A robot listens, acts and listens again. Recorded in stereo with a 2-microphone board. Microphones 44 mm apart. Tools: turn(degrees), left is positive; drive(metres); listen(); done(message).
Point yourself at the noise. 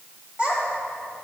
turn(degrees=-25)
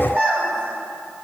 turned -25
turn(degrees=-130)
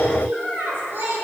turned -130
turn(degrees=-45)
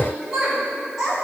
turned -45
turn(degrees=-10)
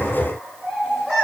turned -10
turn(degrees=-10)
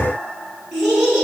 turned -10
done("Facing the child speaking.")